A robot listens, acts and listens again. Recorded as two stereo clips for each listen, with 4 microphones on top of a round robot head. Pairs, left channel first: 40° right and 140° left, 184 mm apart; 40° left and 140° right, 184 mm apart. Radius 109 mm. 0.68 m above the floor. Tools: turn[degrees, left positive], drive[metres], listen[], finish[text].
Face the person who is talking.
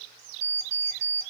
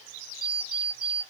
Action: listen[]
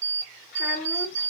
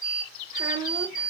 Thought: The child speaking: 75° right.
Action: turn[-75]
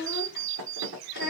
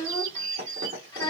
Thought: The child speaking is now 30° right.
Action: turn[-30]
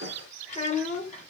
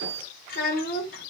Thought: The child speaking is now 10° left.
Action: turn[10]
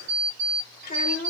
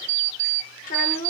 Action: finish[Found it: a child speaking, straight ahead, 1 to 2 m away.]